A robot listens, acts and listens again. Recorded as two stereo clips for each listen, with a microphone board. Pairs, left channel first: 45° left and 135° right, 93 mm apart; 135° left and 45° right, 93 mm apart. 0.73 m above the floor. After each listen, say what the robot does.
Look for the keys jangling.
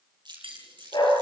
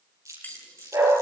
Turn 155° right.
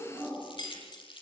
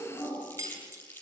Facing the keys jangling.